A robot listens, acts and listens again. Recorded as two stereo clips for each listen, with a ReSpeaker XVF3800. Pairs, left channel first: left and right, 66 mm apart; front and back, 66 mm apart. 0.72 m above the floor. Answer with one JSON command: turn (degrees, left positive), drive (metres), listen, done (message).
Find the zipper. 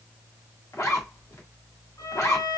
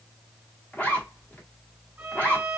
{"turn": 65}
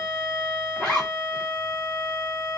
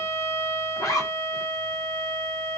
{"turn": 10}
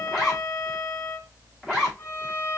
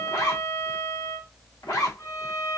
{"done": "Found it: a zipper, straight ahead, 1 to 2 m away."}